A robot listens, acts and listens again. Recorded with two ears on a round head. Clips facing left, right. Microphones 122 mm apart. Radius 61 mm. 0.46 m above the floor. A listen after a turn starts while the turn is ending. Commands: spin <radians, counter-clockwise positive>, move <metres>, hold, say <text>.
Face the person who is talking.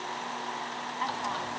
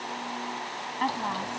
spin -1.13
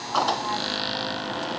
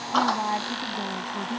hold
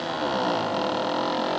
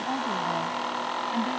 hold
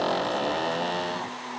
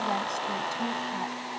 say I heard a woman speaking, but can't make it out now. It was about straight ahead or 50° right.